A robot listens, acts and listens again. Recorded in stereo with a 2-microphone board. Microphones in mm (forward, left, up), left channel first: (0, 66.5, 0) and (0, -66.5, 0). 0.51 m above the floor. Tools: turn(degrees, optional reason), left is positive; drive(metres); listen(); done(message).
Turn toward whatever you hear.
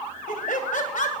turn(degrees=65, reason="The laughter: about 65° left or 115° left.")
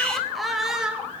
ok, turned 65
done("Found it: laughter, straight ahead, 1 to 2 m away.")